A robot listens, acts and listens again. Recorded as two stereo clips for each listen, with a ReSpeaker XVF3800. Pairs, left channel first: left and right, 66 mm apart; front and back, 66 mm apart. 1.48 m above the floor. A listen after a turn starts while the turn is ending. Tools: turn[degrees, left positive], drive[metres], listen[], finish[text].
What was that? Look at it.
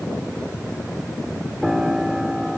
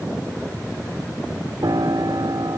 Thought: The piano: 175° right.
Action: turn[-175]
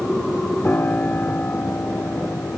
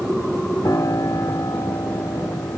Thought: The piano is now 30° left.
Action: turn[30]
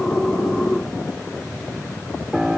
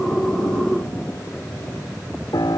Thought: The piano is now 10° right.
Action: turn[-10]
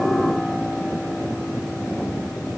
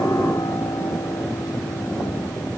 Action: finish[Found it: a piano, straight ahead.]